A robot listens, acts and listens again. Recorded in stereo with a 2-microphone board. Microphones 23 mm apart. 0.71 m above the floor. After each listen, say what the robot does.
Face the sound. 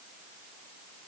Keep listening.
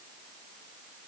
Keep listening.
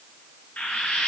Turn 90° left.
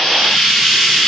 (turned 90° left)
Facing the frying.